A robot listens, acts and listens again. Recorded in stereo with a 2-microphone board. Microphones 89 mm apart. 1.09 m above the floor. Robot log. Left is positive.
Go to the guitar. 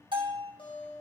cmd yaw +90
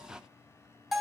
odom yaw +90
cmd idle
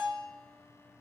cmd idle
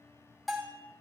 end: I heard a guitar from this way, but can't make it out now. I did not reach it.